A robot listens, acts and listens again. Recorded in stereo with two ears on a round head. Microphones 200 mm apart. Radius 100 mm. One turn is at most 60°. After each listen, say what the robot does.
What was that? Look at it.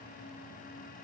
Keep listening.
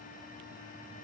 Keep listening.
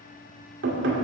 Turn 55° right.
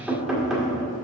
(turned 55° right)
Found it: knocking, straight ahead, 1 to 2 m away.